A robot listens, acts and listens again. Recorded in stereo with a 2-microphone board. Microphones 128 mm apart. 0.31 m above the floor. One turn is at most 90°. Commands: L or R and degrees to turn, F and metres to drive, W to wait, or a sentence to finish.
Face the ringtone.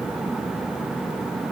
W
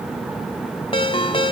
L40
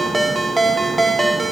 Found it: a ringtone, straight ahead.